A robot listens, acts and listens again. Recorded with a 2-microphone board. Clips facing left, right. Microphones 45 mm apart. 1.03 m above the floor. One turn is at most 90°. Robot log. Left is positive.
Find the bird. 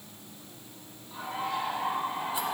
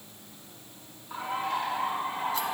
note: The bird: about 55° right or 125° right.
cmd yaw -55
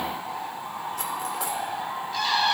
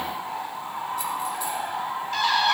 note: So it is at 70° right.
cmd yaw -70
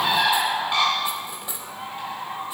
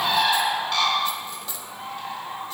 note: The bird is now 20° left.
cmd yaw +20
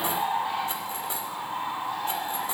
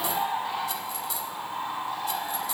end: Facing the bird, over 4 m away.